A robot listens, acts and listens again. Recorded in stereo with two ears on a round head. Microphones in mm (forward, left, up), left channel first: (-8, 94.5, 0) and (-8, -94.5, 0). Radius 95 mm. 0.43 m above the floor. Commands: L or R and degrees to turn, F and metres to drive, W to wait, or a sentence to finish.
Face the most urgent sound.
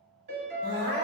R35
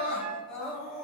Found it: crying, straight ahead, under 1 m away.